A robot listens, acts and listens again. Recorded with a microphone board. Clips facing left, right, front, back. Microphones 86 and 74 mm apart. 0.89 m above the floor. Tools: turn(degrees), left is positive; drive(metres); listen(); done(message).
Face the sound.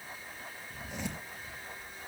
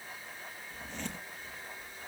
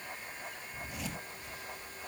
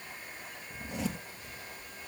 turn(degrees=165)
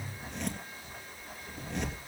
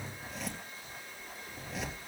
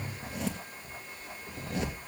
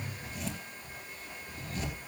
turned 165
done("Facing the zipper.")